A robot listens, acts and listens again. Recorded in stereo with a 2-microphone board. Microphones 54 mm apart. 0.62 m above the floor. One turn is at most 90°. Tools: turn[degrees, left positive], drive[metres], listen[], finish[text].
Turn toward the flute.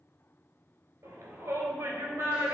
Action: listen[]
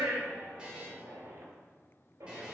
Action: listen[]
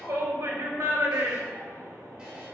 Action: finish[I can't make out a flute to turn to.]